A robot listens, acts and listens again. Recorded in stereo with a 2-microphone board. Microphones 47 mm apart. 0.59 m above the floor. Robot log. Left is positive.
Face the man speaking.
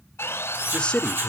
note: The man speaking: about 25° left or 155° left.
cmd yaw +25
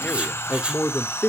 note: So it is at 125° left.
cmd yaw +125
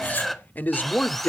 note: The man speaking is now 50° left.
cmd yaw +50
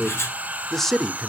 note: The man speaking is now 10° left.
cmd yaw +10
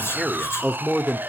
end: Facing the man speaking, 1 to 2 m away.